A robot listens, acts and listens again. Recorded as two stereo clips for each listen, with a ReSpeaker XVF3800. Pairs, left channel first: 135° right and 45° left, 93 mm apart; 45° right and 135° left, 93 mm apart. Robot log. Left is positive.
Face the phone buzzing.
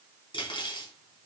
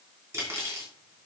cmd idle
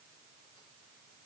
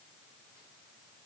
cmd idle
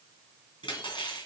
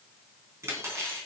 end: I can't make out a phone buzzing to turn to.